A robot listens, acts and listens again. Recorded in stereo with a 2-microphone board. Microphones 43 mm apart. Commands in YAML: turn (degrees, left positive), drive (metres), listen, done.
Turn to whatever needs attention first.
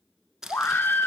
turn: 60
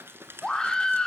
turn: 20
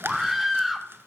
done: "Found it: a scream, straight ahead, 1 to 2 m away."